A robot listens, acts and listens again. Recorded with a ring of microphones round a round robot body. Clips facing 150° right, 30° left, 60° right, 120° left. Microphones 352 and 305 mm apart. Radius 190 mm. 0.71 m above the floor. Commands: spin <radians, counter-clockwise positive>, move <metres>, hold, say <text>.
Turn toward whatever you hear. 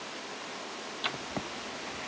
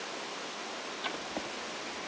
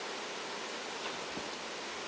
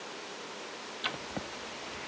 spin 2.62
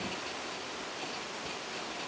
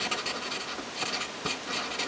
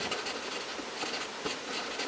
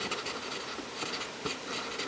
spin 0.70
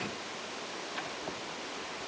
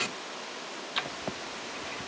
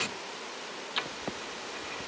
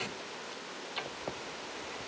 say Facing the writing, under 1 m away.